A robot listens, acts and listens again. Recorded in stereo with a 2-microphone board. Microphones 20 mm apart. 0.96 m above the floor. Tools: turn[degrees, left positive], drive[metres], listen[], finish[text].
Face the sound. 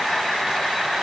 Action: listen[]
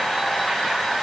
Action: listen[]
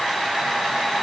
Action: finish[I can't make out anything.]